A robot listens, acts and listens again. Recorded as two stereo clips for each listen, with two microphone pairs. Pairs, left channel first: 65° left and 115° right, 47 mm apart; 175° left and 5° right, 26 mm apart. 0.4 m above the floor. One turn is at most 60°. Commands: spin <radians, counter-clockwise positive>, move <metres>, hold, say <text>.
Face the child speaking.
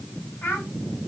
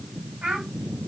spin 0.87
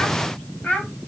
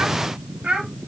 spin 0.17
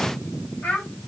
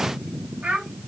spin 0.17
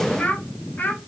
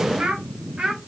spin 0.52
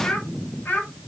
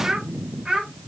spin 0.52
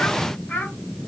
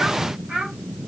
spin 0.44
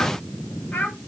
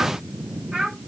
spin 0.52
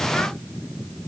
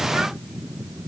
hold
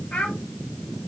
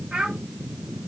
say Facing the child speaking, 1 to 2 m away.